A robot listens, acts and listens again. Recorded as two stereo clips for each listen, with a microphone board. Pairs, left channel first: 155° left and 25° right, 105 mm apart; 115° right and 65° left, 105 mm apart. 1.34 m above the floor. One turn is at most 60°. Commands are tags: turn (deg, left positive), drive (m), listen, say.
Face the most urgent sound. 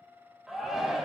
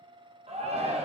<turn deg="60"/>
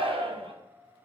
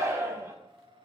<say>Found it: a shout, straight ahead.</say>